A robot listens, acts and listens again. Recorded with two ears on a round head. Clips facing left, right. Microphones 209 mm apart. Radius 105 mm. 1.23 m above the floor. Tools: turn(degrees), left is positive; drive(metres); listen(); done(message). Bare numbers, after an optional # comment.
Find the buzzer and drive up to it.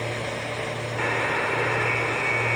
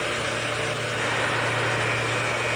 # The buzzer: about 55° left or 125° left.
turn(55)
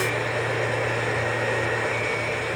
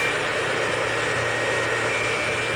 drive(1.0)
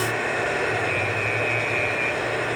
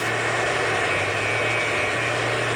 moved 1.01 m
drive(1.0)
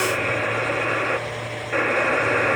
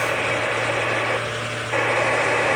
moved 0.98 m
# The buzzer is now 15° left.
turn(15)
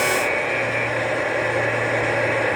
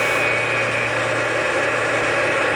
drive(1.0)
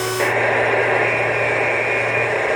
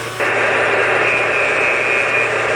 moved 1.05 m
drive(1.0)
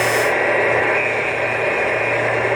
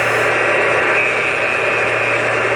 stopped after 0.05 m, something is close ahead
# The buzzer is now 10° right.
turn(-10)
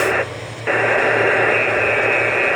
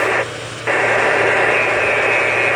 done("I am next to the buzzer.")